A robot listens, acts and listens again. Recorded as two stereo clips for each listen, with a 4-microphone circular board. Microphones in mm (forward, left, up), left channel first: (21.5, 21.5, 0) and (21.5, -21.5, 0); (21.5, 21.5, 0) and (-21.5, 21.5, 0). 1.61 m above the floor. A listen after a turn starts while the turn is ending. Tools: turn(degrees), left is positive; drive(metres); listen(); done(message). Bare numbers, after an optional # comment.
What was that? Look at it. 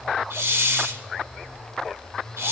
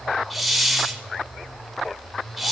# The hiss: 95° right.
turn(-95)
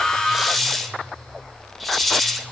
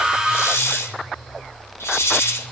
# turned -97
done("Facing the hiss.")